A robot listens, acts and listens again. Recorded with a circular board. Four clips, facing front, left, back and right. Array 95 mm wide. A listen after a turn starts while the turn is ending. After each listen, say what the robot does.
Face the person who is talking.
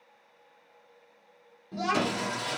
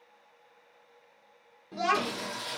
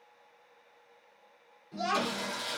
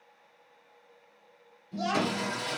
Turn 60° left.
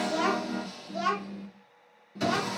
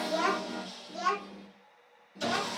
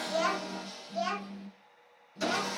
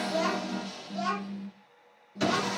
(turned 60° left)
Found it: a child speaking, straight ahead.